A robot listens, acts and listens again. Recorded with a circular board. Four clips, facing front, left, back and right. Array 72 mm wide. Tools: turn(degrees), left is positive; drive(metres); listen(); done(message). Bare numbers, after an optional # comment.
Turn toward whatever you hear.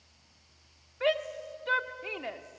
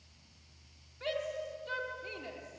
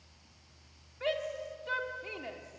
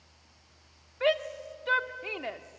# The shout: 60° right.
turn(-60)
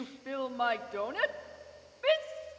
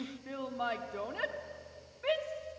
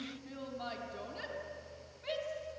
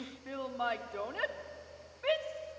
# The shout is now 10° right.
turn(-10)
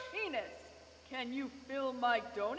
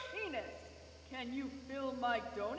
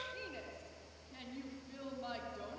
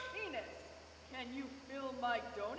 done("Facing the shout, 1 to 2 m away.")